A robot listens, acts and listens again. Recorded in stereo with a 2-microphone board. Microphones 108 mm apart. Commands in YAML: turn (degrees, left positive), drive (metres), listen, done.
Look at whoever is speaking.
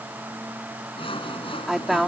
turn: -30
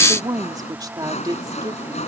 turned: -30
turn: -145
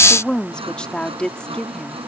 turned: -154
turn: 10
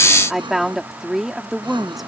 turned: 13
done: "Facing the woman speaking."